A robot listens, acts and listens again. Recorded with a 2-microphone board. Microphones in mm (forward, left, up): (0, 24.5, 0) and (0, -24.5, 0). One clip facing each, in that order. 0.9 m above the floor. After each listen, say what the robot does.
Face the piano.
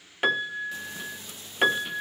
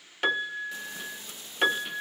Turn 30° left.
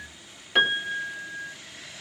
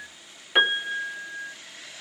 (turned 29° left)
Turn 15° right.
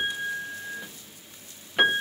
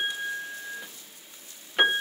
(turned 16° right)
Found it: a piano, straight ahead.